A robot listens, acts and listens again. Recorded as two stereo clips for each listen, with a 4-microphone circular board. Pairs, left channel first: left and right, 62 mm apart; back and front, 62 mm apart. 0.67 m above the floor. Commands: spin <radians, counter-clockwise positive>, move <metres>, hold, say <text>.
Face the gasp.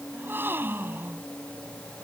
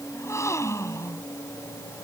spin -2.53
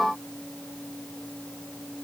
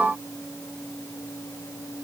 say Facing where the gasp came from. I can't hear it now.